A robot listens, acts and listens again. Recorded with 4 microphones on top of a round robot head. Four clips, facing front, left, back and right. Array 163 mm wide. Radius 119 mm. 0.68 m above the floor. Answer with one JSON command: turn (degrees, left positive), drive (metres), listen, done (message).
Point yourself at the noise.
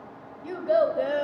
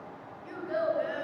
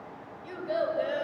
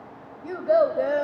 {"turn": -65}
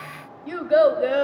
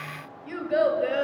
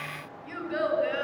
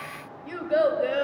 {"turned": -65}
{"done": "Facing the child speaking, 2 to 4 m away."}